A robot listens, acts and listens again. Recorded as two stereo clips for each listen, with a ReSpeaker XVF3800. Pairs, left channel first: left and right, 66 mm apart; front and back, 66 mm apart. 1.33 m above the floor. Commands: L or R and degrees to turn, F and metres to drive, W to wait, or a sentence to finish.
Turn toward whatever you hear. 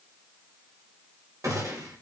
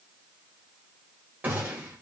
R120
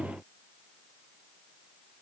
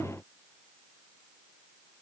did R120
Facing where the gunshot came from. I can't hear it now.